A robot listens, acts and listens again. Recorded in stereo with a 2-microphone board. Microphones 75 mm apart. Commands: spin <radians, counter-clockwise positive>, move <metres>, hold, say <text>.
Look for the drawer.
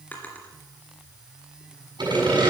spin 0.44
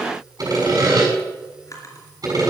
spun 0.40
spin 2.36
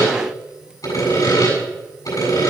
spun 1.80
spin 0.52
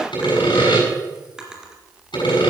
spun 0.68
spin -0.17
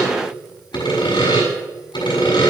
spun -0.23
hold
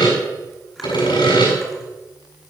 hold
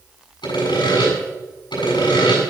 say Facing where the drawer came from. I can't hear it now.